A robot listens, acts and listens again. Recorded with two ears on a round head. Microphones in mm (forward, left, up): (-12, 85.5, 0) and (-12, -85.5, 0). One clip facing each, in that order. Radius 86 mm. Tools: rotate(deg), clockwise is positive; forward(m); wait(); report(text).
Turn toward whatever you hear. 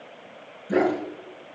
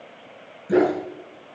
rotate(35)
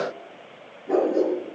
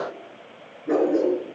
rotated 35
rotate(95)
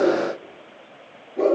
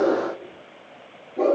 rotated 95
report("Facing the dog barking, over 4 m away.")